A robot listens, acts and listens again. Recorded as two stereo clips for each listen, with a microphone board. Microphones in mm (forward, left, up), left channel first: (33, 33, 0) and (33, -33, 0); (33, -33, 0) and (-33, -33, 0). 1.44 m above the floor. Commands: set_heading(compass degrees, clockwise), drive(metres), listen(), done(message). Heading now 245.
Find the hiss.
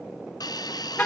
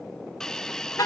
set_heading(165)
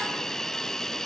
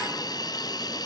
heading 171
set_heading(161)
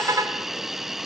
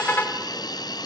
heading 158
done("Found it: a hiss, straight ahead, under 1 m away.")